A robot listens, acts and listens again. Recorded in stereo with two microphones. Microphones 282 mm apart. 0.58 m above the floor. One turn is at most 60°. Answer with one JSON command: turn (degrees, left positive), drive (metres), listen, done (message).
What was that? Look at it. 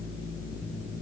{"listen": true}
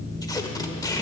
{"turn": 30}
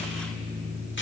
{"listen": true}
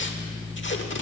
{"turn": 60}
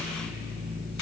{"turn": 60}
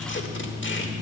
{"turn": 45}
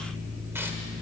{"listen": true}
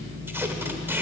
{"turn": -10}
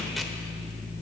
{"listen": true}
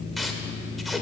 {"done": "Found it: tape being pulled, straight ahead."}